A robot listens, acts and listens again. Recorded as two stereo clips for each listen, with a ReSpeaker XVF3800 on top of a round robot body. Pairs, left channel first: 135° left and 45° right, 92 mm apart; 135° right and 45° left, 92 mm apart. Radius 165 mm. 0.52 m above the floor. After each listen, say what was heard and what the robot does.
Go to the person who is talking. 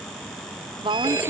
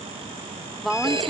The woman speaking: 45° right. Turn 45° right.
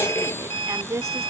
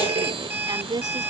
The woman speaking is now 10° left. Turn 10° left.
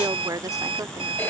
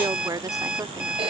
Drive 1.0 m forward.
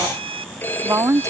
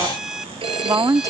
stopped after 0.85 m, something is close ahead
I am next to the woman speaking.